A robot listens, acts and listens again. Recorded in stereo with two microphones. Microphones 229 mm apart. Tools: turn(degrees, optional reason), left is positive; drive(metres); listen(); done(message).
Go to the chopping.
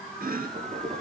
turn(degrees=-45, reason="The chopping: about 45° right or 135° right.")
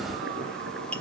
listen()
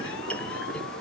drive(metres=1.0)
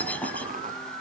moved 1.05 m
drive(metres=1.0)
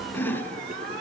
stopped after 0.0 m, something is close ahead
turn(degrees=10, reason="The chopping is now 10° left.")
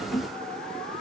listen()
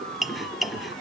done("I am next to the chopping.")